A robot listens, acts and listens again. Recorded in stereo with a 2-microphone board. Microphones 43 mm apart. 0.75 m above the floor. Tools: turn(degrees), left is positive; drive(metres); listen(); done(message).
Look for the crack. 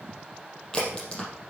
turn(degrees=20)
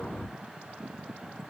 listen()
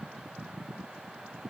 done("I heard a crack, but can't make it out now. It was about straight ahead or 140° left.")